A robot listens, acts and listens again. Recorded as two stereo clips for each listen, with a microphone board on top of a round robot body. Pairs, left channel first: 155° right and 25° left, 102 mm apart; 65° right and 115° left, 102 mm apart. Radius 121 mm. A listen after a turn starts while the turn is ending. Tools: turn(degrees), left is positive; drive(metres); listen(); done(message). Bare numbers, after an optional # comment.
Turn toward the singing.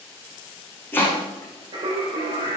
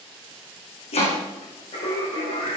# The singing: 20° right.
turn(-20)
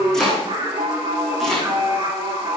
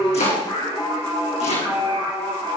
done("Found it: singing, straight ahead.")